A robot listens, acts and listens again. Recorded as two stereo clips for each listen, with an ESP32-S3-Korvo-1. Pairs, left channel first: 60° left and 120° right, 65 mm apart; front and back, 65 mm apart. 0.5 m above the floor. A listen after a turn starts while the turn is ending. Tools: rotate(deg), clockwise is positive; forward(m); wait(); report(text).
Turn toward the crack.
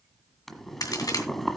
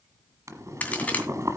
rotate(-65)
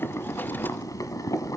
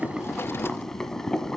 report("I heard a crack from this way, but can't make it out now.")